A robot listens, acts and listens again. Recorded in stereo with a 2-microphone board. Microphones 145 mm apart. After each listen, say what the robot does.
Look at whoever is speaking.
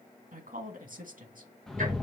Turn 70° right.
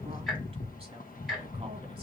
Keep listening.
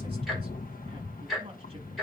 Keep listening.
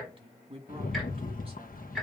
Turn 40° right.
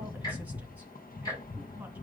Keep listening.
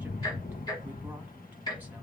Keep listening.
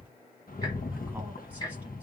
Facing where the woman speaking came from. I can't hear it now.